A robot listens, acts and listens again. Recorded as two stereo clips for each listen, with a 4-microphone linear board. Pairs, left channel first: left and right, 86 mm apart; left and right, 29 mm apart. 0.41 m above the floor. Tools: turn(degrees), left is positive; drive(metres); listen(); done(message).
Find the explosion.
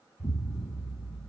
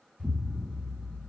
turn(degrees=55)
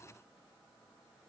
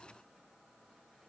listen()
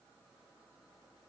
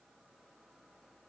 done("I heard an explosion, but can't make it out now. It was about straight ahead or 70° left.")